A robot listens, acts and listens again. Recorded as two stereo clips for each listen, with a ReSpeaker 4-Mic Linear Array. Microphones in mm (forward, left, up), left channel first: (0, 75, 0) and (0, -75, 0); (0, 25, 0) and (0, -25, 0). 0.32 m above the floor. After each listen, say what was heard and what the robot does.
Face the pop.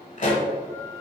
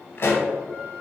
The pop: about 55° left or 125° left. Turn 55° left.
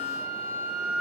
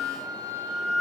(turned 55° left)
Keep listening.
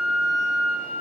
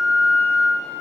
I heard a pop, but can't make it out now. It was about straight ahead or 70° left.